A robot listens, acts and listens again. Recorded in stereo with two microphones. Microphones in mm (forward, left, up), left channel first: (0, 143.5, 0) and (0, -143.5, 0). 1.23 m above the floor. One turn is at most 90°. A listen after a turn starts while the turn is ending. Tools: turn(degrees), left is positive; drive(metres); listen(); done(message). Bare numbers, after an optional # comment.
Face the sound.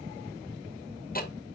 # The ticking: about 35° left or 145° left.
turn(35)
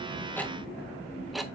done("Found it: ticking, straight ahead, under 1 m away.")